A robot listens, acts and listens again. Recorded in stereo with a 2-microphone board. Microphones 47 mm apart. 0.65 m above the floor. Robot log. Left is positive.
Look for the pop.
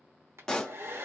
cmd yaw +30
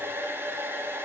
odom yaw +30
cmd idle
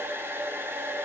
end: I heard a pop, but can't make it out now. It was about 20° right or 140° left.